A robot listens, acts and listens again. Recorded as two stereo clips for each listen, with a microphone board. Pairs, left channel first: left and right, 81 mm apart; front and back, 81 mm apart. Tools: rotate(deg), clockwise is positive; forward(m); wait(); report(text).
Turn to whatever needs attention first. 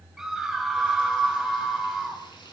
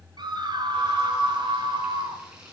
rotate(175)
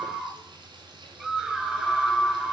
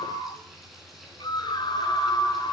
report("Found it: a scream, straight ahead, 2 to 4 m away.")